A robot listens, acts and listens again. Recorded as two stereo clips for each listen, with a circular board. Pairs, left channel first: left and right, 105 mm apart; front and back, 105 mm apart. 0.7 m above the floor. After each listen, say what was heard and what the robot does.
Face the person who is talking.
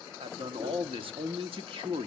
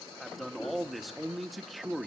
The man speaking: 90° right. Turn 90° right.
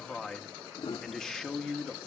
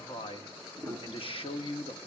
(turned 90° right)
Facing the man speaking.